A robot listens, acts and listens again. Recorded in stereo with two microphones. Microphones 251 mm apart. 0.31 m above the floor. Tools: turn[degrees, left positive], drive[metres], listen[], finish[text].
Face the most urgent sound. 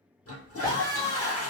Thought: The scream: about 15° left or 165° left.
Action: turn[15]
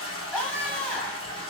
Action: finish[Facing the scream.]